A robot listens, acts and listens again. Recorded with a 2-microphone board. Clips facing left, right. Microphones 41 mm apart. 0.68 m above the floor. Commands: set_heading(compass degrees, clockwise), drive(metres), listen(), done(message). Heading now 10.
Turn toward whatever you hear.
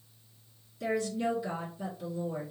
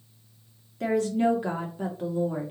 set_heading(65)
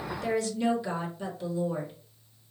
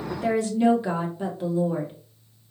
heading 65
set_heading(100)
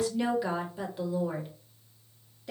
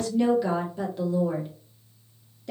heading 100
set_heading(90)
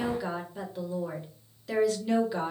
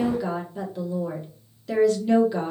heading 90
done("Facing the woman speaking, 1 to 2 m away.")